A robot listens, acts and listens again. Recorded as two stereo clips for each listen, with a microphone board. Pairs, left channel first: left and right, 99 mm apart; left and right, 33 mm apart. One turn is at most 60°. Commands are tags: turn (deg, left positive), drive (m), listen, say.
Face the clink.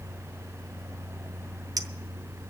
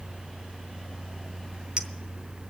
<turn deg="-40"/>
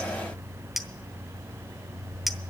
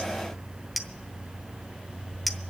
<say>Found it: a clink, straight ahead, under 1 m away.</say>